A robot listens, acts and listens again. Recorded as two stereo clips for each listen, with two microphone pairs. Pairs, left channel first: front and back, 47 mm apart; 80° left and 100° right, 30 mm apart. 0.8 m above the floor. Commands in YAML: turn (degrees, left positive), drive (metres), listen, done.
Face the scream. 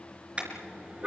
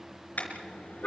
listen: true
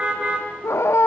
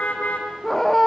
done: "Found it: a scream, straight ahead."